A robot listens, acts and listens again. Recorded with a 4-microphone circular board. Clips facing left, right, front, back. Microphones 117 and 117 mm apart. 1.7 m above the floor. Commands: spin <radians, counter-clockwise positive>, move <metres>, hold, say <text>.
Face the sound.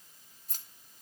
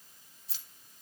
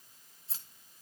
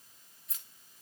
spin 0.96
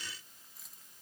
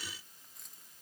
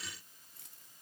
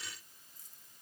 hold
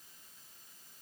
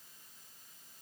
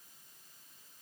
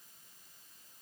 hold
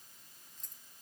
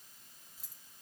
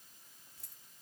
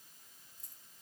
spin -0.17
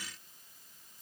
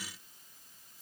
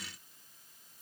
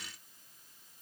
hold
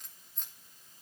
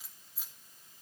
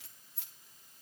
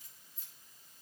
say Found it: keys jangling, straight ahead, 2 to 4 m away.